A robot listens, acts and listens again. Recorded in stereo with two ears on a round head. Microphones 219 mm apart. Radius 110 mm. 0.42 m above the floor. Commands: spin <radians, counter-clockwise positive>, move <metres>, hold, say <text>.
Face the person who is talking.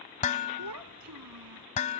spin -1.57
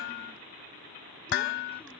hold
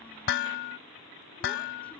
hold
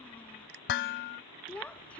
say Facing the child speaking.